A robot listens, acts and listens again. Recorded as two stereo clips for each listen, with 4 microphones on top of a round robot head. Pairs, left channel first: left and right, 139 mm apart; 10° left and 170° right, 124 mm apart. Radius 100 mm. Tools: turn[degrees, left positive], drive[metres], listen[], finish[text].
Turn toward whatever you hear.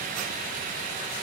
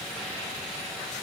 Action: listen[]
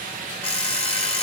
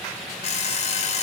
Thought: The alarm clock: 45° left.
Action: turn[45]
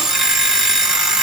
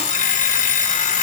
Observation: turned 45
Action: finish[Facing the alarm clock, 1 to 2 m away.]